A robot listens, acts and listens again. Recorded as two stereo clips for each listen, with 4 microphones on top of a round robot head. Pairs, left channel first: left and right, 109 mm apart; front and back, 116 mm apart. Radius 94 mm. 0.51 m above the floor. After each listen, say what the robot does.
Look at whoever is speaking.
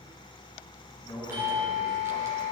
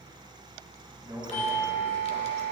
Turn 120° left.
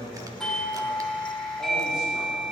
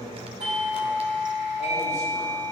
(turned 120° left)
Facing the man speaking.